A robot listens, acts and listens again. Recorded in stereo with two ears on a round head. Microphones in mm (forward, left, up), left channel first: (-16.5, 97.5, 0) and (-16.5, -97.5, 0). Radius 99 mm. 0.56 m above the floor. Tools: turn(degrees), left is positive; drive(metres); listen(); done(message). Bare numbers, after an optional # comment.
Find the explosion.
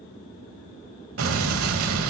turn(-90)
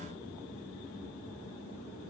done("Facing where the explosion came from. I can't hear it now.")